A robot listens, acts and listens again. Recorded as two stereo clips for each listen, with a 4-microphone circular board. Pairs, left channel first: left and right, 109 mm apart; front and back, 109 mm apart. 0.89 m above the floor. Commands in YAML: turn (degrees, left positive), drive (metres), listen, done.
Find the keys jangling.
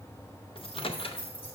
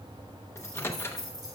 turn: 130
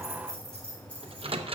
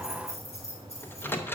turn: 10
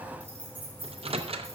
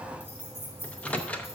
turn: 15
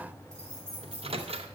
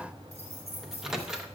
turn: 10
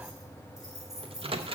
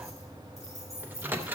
done: "Facing the keys jangling, over 4 m away."